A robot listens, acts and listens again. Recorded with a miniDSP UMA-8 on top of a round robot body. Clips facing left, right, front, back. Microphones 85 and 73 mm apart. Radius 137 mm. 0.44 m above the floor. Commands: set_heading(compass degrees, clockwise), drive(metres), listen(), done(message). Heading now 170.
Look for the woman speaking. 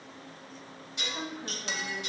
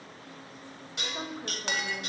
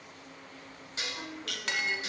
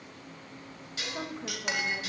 set_heading(310)
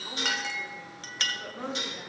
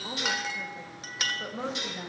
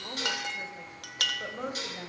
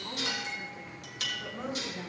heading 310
set_heading(335)
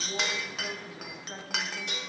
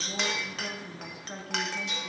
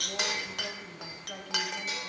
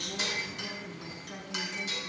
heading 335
done("Found it: a woman speaking, straight ahead.")